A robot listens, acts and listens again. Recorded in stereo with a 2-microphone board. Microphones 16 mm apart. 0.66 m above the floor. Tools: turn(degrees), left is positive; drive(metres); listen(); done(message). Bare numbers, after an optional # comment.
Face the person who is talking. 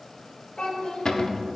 # The child speaking: about 65° left or 115° left.
turn(65)
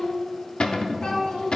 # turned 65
# So it is at 75° left.
turn(75)
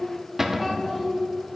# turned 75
# The child speaking is now 15° left.
turn(15)
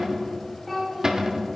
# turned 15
done("Facing the child speaking, 2 to 4 m away.")